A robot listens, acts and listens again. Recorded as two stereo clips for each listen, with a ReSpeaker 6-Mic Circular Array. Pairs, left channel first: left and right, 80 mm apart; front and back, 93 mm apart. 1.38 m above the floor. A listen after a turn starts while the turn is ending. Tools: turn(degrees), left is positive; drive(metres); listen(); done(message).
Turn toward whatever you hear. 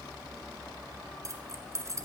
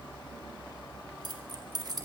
turn(degrees=-140)
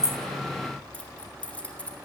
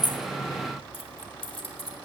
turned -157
turn(degrees=15)
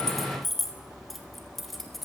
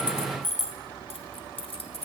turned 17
done("Facing the keys jangling, 2 to 4 m away.")